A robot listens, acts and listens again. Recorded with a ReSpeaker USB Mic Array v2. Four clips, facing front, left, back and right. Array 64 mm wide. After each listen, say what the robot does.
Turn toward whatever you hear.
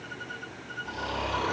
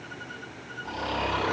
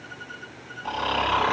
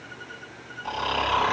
Turn 150° right.
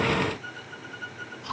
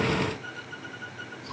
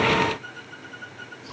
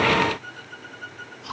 Turn 40° right.
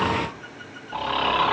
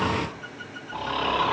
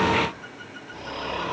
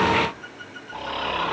Facing the snoring.